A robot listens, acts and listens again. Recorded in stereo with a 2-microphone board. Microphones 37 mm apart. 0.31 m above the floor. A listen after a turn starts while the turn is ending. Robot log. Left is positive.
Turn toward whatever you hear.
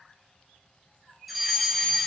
cmd yaw +30
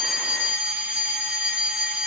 note: So it is at 30° right.
cmd yaw -30
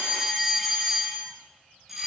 end: Found it: a fire alarm, straight ahead, over 4 m away.